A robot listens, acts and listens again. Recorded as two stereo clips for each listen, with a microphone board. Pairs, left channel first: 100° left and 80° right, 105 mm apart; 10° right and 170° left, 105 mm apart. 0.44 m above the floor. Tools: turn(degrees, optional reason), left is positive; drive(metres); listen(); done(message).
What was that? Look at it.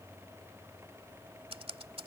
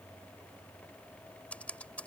turn(degrees=-85, reason="The typing on a keyboard: 85° right.")
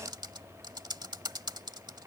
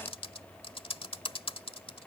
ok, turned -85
turn(degrees=-35, reason="The typing on a keyboard is now 35° right.")
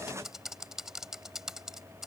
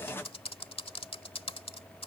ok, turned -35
done("Facing the typing on a keyboard.")